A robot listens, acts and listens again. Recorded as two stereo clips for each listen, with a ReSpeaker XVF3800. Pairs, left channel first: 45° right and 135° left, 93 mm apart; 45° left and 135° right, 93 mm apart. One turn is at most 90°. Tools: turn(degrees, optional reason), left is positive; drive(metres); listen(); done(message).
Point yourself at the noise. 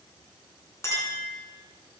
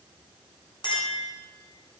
turn(degrees=15, reason="The clink: 15° left.")
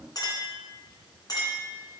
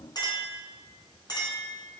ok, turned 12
done("Facing the clink.")